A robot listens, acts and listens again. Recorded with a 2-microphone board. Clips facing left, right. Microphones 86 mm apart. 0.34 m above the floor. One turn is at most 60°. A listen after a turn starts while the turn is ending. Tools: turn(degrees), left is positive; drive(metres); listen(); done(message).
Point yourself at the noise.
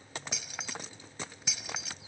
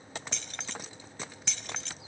turn(degrees=30)
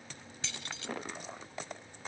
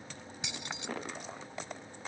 turn(degrees=-20)
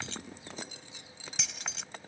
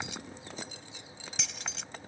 done("Found it: keys jangling, straight ahead.")